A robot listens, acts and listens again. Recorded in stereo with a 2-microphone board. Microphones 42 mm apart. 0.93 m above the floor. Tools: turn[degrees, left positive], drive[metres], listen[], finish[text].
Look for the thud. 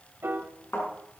Action: turn[90]
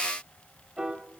Action: finish[I heard a thud from this way, but can't make it out now.]